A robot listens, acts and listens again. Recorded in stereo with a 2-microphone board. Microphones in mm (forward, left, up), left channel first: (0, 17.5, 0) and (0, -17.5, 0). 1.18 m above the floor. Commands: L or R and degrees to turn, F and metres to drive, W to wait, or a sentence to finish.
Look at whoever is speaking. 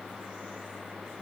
W
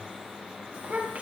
R40
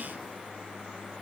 W
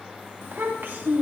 R100
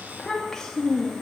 L10
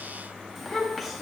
Found it: a child speaking, straight ahead, 1 to 2 m away.